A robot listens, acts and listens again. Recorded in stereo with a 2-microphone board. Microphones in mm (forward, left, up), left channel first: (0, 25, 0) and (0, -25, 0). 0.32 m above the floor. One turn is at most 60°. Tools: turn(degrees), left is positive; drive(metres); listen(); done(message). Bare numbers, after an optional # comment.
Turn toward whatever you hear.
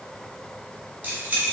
# The keys jangling: about 30° right or 150° right.
turn(-30)
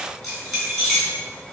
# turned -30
done("Found it: keys jangling, straight ahead, 1 to 2 m away.")